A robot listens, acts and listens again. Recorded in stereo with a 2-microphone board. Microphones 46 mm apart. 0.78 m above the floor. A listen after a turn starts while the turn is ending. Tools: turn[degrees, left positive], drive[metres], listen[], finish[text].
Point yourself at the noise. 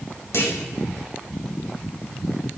Thought: The clunk: about 70° left or 110° left.
Action: turn[70]
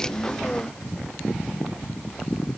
Action: listen[]
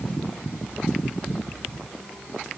Action: finish[I heard a clunk, but can't make it out now. It was about straight ahead or 40° left.]